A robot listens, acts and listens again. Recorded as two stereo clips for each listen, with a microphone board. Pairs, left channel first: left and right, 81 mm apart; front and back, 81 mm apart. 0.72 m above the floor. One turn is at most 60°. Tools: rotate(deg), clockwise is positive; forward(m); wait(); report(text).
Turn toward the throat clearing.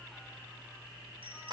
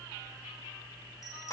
wait()
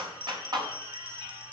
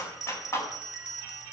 wait()
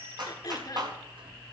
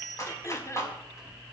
rotate(-50)
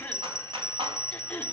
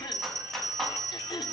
rotate(-20)
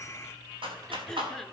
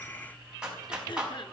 report("Facing the throat clearing, 1 to 2 m away.")